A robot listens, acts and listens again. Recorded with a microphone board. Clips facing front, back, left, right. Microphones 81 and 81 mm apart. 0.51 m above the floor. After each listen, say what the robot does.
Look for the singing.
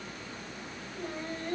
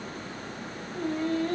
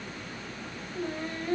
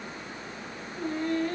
Turn 175° left.
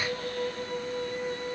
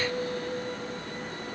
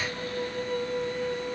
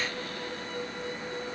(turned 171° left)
Turn 45° left.
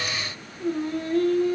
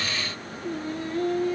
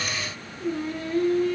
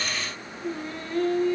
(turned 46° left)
Turn 10° left.
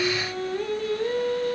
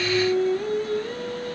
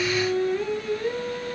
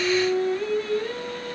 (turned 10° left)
Facing the singing, 2 to 4 m away.